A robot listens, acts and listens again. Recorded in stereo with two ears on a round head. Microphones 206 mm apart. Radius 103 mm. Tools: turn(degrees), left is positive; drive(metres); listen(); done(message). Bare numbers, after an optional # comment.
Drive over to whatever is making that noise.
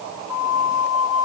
turn(90)
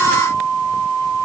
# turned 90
drive(1.0)
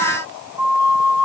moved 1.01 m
drive(1.0)
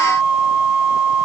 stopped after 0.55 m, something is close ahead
done("I am next to the flute.")